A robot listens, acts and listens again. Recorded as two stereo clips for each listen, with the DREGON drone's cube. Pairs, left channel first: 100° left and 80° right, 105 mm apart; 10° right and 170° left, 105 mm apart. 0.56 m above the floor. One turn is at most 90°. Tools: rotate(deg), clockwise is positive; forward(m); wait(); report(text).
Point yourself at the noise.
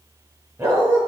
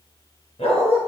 rotate(30)
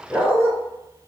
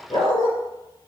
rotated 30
report("Facing the dog barking.")